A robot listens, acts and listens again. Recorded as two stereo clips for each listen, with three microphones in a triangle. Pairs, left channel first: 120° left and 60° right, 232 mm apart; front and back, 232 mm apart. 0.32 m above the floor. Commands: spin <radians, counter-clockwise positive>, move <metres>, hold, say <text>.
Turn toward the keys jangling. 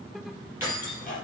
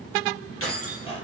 spin 0.35
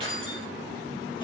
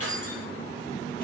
spin 0.17
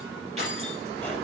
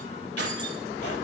say Found it: keys jangling, straight ahead.